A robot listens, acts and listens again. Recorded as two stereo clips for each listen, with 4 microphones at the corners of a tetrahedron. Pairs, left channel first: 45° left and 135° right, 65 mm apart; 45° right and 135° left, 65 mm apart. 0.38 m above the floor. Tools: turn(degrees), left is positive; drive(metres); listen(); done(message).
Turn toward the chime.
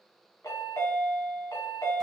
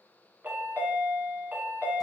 turn(degrees=75)
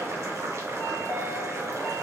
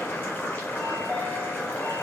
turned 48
turn(degrees=25)
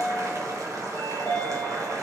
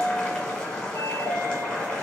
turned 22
done("Facing the chime, 1 to 2 m away.")